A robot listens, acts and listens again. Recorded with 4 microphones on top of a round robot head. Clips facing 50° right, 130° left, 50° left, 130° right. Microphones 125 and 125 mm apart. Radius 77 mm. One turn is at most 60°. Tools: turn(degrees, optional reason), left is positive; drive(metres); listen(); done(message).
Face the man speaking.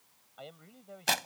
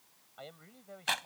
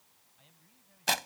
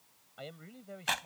turn(degrees=-60, reason="The man speaking: 135° right.")
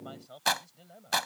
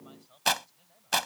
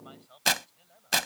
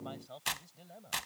turn(degrees=-60, reason="The man speaking is now 80° right.")
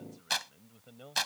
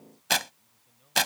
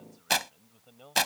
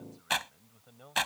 turn(degrees=-30, reason="The man speaking is now 30° right.")
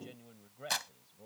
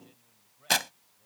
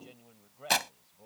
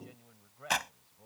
turn(degrees=-25, reason="The man speaking is now 25° right.")
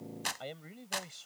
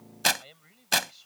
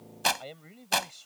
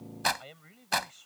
turn(degrees=-10, reason="The man speaking is now 10° right.")
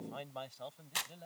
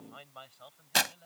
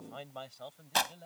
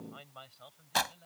done("Found it: a man speaking, straight ahead.")